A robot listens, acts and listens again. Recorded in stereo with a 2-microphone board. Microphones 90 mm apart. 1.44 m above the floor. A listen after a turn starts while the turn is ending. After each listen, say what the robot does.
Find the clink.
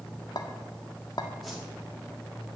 Turn 50° left.
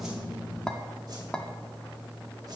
Turn 10° left.
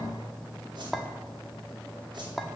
Facing the clink.